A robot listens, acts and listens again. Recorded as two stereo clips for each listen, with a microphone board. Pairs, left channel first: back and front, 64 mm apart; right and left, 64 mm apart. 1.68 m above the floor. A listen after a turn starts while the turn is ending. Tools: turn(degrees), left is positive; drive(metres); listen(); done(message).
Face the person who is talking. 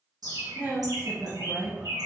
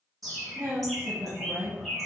turn(degrees=60)
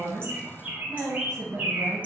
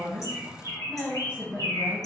done("Found it: a woman speaking, straight ahead, 1 to 2 m away.")